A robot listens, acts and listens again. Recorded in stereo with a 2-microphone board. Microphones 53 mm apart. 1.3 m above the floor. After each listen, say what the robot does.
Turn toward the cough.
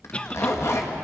Turn 25° left.
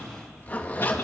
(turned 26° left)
Keep listening.
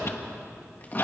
Turn 130° left.
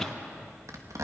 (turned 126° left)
Facing the cough.